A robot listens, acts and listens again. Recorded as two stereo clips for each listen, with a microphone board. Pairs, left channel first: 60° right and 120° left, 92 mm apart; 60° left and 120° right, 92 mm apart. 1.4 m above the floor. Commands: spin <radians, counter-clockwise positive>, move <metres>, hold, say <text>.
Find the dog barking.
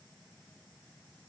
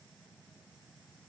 hold
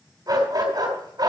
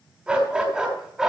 spin 2.79
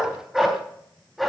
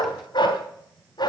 spin 0.52
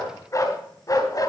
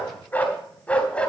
spin -0.26
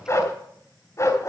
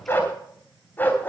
spin -0.17
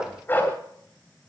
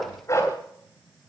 say Found it: a dog barking, straight ahead, 2 to 4 m away.